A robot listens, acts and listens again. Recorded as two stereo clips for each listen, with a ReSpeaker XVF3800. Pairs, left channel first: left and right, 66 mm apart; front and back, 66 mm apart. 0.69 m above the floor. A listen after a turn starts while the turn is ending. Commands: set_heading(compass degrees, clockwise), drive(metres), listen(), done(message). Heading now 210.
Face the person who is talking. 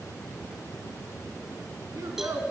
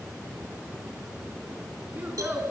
set_heading(330)
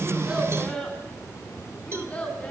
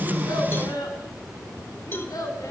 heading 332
set_heading(312)
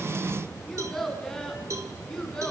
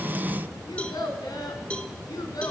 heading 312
set_heading(302)
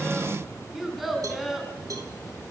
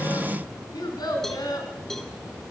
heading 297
done("Facing the child speaking.")